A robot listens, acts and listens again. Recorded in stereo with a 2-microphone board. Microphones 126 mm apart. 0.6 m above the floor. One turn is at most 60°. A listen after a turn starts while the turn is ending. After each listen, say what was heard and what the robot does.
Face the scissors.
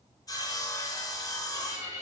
Keep listening.
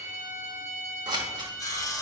The scissors: about 35° right or 145° right. Turn 35° right.
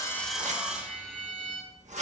So it is at 110° right. Turn 60° right.
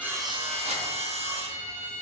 Nothing new. It was at 50° right. Turn 50° right.
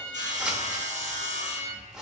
Facing the scissors.